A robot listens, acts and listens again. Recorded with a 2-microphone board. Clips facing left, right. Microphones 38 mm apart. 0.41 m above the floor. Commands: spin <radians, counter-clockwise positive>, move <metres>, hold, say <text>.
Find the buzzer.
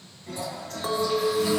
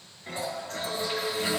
hold
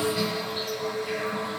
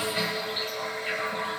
hold
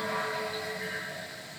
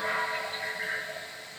say I can't make out a buzzer to turn to.